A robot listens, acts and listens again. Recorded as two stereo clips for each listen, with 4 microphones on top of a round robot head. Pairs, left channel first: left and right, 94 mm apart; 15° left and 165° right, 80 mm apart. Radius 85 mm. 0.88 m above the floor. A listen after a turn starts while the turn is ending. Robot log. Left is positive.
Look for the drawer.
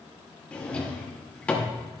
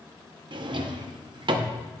note: The drawer: 170° left.
cmd yaw +170
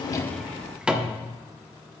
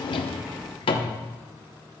note: The drawer is now 10° right.
cmd yaw -10
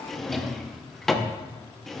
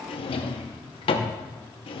end: Facing the drawer, under 1 m away.